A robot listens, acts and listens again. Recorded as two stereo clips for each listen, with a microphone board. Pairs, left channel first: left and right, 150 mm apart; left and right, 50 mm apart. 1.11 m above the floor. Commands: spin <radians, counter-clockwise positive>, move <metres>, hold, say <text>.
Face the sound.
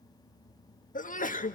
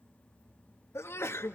spin 1.13
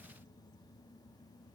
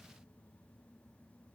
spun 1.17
hold
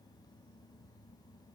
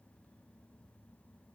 say I heard a sneeze, but can't make it out now. It was about 5° right or 50° left.